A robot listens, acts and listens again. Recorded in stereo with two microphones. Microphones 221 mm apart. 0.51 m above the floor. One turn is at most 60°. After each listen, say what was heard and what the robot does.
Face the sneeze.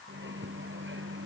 Keep listening.
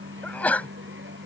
Turn 30° left.
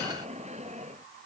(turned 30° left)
Keep listening.
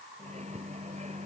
I heard a sneeze, but can't make it out now. It was about 25° right or 145° left.